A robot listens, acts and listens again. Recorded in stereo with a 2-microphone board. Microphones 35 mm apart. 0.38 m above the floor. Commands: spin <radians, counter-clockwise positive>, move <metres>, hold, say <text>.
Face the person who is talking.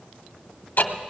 hold
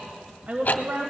spin -0.96
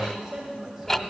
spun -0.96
spin -0.17
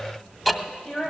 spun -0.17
spin 0.35
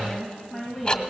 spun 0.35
say Facing the woman speaking, 2 to 4 m away.